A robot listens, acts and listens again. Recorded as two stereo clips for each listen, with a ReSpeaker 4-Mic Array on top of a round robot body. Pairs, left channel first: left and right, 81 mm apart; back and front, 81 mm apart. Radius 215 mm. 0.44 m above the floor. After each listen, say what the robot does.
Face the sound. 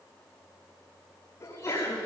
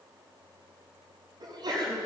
Turn 35° left.
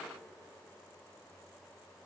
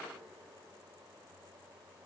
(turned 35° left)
Facing where the sneeze came from. I can't hear it now.